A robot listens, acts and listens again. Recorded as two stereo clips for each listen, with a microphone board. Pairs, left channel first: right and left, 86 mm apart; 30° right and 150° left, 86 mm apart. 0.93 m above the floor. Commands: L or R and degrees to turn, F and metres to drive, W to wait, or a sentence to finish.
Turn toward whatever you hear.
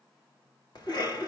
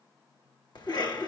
R60
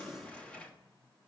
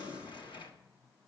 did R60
R10
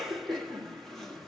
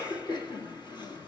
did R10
Facing the cough.